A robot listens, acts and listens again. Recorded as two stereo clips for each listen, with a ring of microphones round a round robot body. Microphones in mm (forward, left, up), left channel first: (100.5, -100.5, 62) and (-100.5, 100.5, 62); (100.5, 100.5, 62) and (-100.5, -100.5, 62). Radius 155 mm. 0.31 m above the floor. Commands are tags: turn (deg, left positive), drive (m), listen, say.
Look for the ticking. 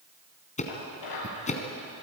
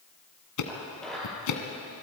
<turn deg="20"/>
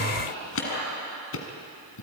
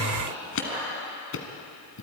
<say>Facing the ticking.</say>